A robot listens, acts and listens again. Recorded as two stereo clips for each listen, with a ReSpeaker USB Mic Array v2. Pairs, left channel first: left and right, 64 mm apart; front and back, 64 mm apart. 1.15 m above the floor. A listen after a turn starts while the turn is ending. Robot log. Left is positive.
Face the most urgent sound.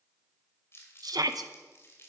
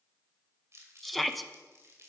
note: The shout: 90° right.
cmd yaw -90
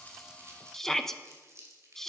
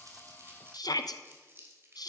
end: Found it: a shout, straight ahead.